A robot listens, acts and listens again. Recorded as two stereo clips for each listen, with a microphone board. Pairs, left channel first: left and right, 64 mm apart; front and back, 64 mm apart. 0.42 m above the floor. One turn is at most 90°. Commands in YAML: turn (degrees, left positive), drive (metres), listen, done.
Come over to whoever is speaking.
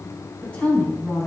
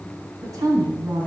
turn: 90
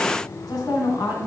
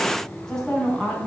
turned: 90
turn: 80
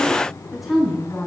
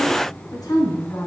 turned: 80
drive: 1.0
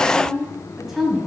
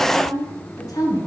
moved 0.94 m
drive: 1.0
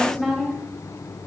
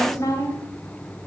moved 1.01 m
drive: 1.0
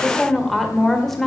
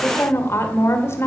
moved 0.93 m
drive: 1.0
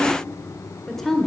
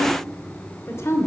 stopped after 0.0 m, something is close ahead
turn: 10
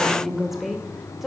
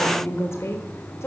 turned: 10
done: "I am next to the woman speaking."